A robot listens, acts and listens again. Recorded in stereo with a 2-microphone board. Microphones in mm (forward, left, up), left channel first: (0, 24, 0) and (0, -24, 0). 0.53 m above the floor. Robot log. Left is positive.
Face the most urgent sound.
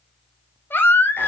note: The baby crying: about 50° left or 130° left.
cmd yaw +50
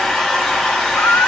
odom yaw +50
note: So it is at 75° left.
cmd yaw +75
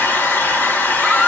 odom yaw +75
end: Found it: a baby crying, straight ahead, under 1 m away.